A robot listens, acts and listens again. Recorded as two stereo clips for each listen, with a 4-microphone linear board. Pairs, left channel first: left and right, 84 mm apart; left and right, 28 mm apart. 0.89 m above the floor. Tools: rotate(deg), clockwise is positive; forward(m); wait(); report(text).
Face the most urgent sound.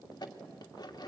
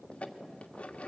wait()
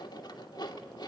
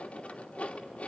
wait()
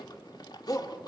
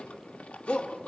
rotate(-40)
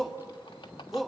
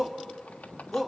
report("Found it: a shout, straight ahead, 1 to 2 m away.")